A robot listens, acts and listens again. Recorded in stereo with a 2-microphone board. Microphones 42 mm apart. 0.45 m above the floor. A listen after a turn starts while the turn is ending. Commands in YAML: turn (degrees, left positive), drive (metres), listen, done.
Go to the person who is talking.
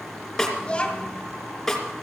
turn: 25
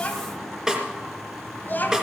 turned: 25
turn: 130
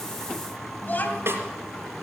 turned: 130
turn: 55
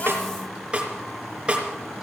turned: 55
listen: true
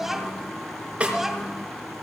drive: 1.0
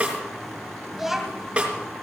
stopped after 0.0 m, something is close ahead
done: "Something is in my way. I am facing the child speaking but have not reached it."